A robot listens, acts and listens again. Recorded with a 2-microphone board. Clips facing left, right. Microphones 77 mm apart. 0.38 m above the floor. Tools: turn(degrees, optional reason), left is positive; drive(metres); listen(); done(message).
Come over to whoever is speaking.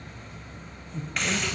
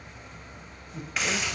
turn(degrees=-30)
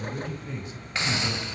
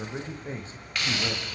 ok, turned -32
turn(degrees=-135, reason="So it is at 135° right.")
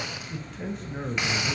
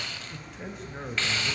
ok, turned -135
drive(metres=1.0)
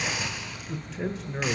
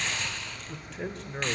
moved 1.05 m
drive(metres=1.0)
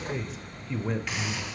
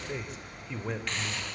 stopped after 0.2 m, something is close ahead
done("I am next to the man speaking.")